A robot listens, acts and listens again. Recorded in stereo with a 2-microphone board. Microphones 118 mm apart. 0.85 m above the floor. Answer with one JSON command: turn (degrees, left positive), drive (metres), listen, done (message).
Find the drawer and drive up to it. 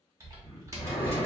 {"turn": 60}
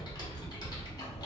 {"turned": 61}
{"listen": true}
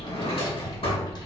{"turn": 55}
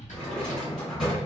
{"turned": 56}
{"drive": 1.0}
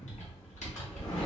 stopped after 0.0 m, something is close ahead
{"listen": true}
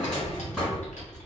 {"done": "Blocked. The drawer is further on, straight ahead."}